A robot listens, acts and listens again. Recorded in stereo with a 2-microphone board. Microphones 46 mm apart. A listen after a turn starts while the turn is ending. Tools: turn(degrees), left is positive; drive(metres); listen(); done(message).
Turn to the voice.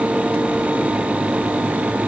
listen()
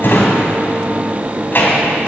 listen()
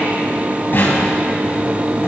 done("I can't make out anyone speaking, only a drawer.")